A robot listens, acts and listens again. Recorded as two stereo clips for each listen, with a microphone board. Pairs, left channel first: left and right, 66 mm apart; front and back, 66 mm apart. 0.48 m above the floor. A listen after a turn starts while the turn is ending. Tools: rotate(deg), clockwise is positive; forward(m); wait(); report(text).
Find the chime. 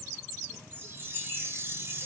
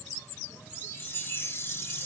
rotate(50)
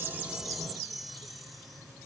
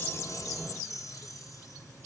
report("Found it: a chime, straight ahead, 1 to 2 m away.")